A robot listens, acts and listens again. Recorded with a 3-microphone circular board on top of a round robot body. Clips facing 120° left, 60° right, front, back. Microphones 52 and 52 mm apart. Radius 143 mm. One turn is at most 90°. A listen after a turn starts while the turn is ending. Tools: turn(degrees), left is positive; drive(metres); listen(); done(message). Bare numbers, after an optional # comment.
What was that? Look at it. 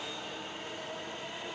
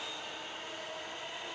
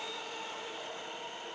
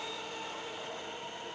listen()
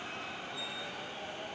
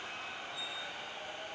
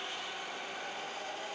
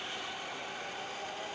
listen()
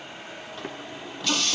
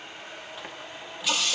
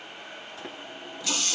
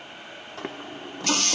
# The running tap: 145° right.
turn(-90)
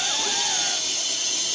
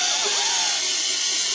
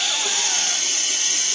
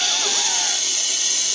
# The running tap is now 55° right.
turn(-55)
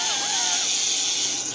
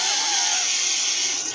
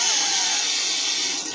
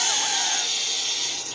# The running tap is now 15° right.
turn(-15)
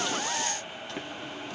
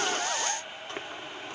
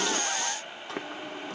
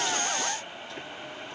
done("Facing the running tap, 1 to 2 m away.")